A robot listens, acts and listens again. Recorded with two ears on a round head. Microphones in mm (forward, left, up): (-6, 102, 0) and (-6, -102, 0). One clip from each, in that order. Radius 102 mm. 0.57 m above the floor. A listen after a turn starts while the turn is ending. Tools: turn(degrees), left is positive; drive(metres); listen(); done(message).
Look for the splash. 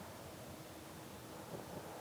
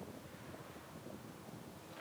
listen()
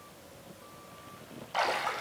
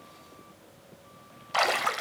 turn(degrees=-40)
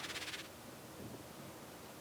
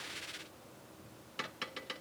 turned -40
listen()
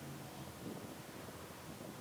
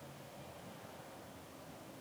done("I heard a splash, but can't make it out now. It was about straight ahead or 100° right.")